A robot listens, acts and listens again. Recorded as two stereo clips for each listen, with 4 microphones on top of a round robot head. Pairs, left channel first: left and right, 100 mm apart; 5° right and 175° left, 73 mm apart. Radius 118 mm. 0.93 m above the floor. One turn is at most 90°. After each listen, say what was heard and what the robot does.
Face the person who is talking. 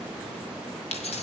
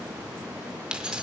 Keep listening.
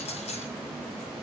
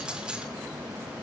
Keep listening.
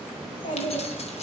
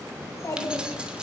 The child speaking: 45° left. Turn 45° left.
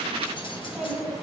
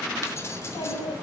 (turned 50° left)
Facing the child speaking, over 4 m away.